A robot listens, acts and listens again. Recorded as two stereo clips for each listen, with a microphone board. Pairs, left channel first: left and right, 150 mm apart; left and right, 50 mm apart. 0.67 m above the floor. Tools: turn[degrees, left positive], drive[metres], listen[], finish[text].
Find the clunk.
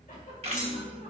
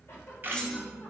Thought: The clunk: about 20° left or 160° left.
Action: turn[20]
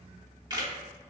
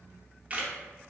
Action: listen[]
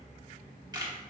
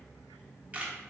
Action: finish[I heard a clunk, but can't make it out now. It was about straight ahead or 140° left.]